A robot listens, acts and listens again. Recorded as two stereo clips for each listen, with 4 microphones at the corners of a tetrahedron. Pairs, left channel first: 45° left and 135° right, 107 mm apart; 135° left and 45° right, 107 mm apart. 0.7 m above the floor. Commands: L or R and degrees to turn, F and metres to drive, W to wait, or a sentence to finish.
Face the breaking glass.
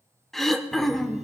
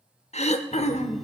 W
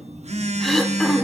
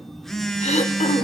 W
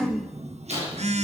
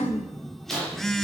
L50
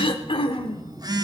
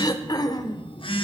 Facing where the breaking glass came from. I can't hear it now.